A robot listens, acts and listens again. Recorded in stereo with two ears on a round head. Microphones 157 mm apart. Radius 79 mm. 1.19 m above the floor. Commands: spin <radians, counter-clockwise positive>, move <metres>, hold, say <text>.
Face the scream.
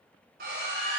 spin -0.96
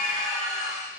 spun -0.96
say Facing the scream, 2 to 4 m away.